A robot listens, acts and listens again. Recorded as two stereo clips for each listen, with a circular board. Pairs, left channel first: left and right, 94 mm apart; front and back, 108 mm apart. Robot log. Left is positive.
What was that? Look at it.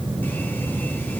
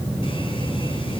cmd idle
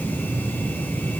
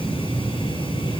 cmd idle
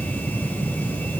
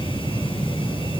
end: I can't make out anything.